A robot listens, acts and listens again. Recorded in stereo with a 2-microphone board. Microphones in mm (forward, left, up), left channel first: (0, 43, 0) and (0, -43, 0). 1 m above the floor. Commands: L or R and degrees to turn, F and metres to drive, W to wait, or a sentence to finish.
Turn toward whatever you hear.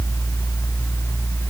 W
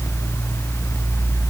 W
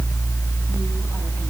I can't make out anything.